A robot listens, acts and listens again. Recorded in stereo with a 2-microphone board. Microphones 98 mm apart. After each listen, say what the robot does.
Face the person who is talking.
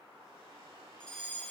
Keep listening.
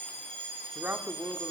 Turn 20° right.
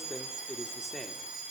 Found it: a man speaking, straight ahead.